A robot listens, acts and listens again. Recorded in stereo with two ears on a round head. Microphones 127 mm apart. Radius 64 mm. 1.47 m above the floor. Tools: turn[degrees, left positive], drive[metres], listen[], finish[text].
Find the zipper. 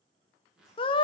Action: turn[-30]
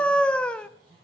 Thought: So it is at 145° right.
Action: turn[-145]
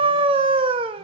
Action: listen[]
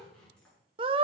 Action: finish[Facing the zipper, over 4 m away.]